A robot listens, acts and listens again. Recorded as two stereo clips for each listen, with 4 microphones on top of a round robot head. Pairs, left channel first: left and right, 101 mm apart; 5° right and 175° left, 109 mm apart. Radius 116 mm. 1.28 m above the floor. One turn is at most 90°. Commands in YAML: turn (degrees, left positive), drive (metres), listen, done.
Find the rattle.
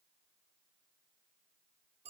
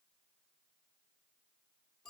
listen: true
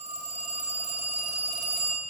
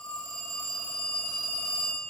listen: true
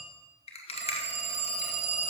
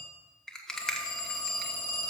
turn: 80
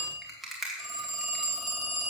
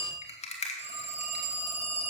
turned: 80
done: "Found it: a rattle, straight ahead, 1 to 2 m away."